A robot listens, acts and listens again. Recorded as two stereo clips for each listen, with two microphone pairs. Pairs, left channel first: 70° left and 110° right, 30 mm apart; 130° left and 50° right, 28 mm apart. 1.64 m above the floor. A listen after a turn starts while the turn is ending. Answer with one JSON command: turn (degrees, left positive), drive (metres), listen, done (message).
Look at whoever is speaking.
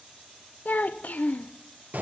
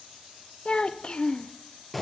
{"turn": 85}
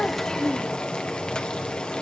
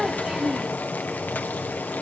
{"listen": true}
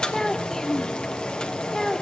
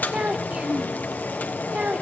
{"done": "Facing the child speaking, under 1 m away."}